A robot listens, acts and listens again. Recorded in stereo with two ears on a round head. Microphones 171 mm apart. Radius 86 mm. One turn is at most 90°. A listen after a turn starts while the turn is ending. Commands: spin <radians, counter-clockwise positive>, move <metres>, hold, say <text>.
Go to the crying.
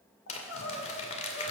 spin 1.57
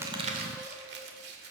hold
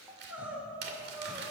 spin -0.17
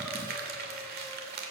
hold
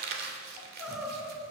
move 1.0
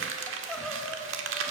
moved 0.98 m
move 1.0
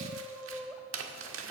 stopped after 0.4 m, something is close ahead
say I am next to the crying.